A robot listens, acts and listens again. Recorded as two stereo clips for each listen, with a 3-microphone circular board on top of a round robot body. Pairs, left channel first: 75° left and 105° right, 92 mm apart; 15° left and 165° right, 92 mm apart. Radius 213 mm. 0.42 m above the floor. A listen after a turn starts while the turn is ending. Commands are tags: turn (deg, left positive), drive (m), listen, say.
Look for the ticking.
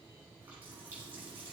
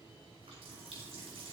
<listen/>
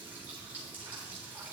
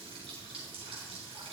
<listen/>
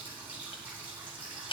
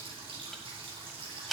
<turn deg="105"/>
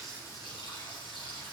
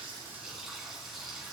<listen/>
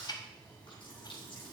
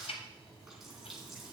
<turn deg="30"/>
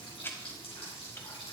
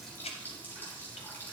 <say>Found it: ticking, straight ahead, under 1 m away.</say>